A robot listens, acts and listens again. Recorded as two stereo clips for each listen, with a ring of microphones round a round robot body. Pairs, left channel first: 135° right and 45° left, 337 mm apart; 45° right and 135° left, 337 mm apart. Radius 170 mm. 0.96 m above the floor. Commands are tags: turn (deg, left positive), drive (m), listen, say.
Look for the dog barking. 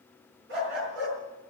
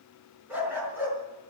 <turn deg="50"/>
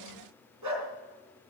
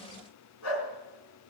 <say>Facing the dog barking.</say>